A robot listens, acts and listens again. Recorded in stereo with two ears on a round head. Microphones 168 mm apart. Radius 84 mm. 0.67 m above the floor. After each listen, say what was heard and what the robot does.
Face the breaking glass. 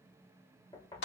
Keep listening.
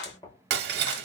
The breaking glass: about 60° right or 120° right. Turn 60° right.
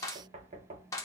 Keep listening.
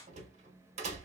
I heard breaking glass, but can't make it out now. It was about straight ahead or 60° right.